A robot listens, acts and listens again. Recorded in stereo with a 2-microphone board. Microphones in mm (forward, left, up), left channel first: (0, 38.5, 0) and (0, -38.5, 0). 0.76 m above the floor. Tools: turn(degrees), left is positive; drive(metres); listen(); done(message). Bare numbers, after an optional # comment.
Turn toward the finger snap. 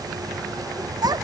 listen()
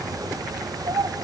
listen()
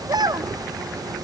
done("I can't make out a finger snap, only a child speaking.")